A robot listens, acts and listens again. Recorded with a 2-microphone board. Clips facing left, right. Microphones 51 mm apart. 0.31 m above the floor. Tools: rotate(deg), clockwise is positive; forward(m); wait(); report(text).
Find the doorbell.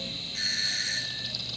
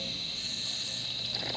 rotate(-65)
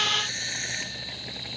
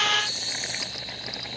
rotate(-45)
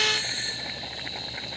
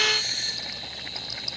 rotate(-15)
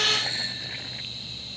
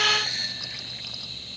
report("Found it: a doorbell, straight ahead.")